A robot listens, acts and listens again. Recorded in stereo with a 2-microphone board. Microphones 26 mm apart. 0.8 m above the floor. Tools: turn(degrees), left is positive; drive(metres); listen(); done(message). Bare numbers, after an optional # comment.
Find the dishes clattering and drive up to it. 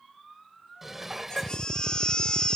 turn(-30)
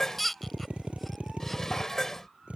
# So it is at 15° left.
turn(15)
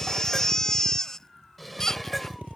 drive(1.0)
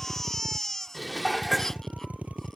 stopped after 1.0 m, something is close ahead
done("I am next to the dishes clattering.")